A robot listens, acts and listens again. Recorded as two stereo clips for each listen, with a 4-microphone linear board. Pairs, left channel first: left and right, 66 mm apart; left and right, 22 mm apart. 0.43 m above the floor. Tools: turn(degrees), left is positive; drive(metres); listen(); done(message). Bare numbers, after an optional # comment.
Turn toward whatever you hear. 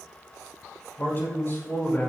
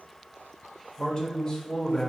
# The man speaking: about 35° left or 145° left.
turn(35)
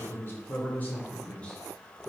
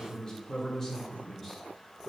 # So it is at 10° left.
turn(10)
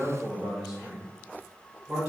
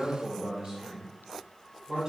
# The man speaking is now 15° right.
turn(-15)
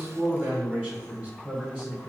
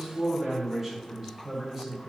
# The man speaking is now 10° right.
turn(-10)
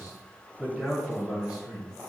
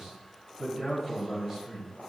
done("Found it: a man speaking, straight ahead, 2 to 4 m away.")